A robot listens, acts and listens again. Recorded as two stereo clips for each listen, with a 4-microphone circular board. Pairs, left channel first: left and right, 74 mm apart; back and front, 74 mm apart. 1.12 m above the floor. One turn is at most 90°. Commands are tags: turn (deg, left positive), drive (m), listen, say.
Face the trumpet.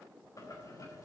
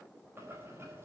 <listen/>
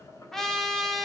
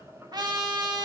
<say>Found it: a trumpet, straight ahead.</say>